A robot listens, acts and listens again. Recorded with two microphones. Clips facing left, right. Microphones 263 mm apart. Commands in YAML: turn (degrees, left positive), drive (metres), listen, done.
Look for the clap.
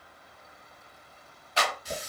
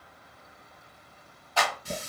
turn: 20
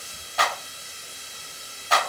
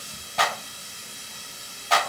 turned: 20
done: "Found it: a clap, straight ahead."